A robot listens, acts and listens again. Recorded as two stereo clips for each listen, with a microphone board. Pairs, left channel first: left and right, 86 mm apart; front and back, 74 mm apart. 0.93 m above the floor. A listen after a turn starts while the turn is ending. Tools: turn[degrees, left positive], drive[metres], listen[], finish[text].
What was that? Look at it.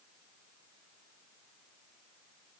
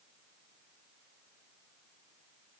Action: listen[]
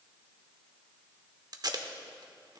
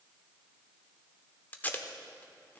Thought: The tape being pulled: 65° right.
Action: turn[-65]
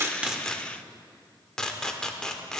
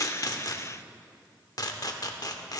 Thought: The tape being pulled is now 10° left.
Action: turn[10]
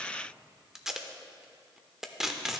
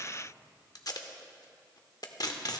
Action: finish[Found it: tape being pulled, straight ahead.]